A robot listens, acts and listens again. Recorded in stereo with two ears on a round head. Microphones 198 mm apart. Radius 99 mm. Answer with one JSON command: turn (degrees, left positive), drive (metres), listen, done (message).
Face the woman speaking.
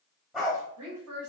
{"turn": -70}
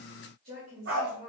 {"turn": -45}
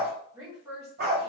{"done": "Found it: a woman speaking, straight ahead."}